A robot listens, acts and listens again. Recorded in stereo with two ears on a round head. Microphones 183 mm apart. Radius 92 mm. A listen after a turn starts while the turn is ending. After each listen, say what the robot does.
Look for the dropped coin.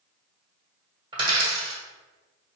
Turn 20° right.
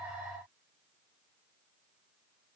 Keep listening.
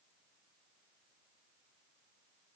I heard a dropped coin, but can't make it out now. It was about straight ahead or 140° right.